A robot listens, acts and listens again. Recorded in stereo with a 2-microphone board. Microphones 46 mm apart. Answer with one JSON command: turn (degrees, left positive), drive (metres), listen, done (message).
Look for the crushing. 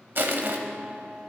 {"turn": -55}
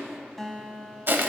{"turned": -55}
{"turn": -65}
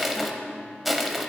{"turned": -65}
{"done": "Facing the crushing."}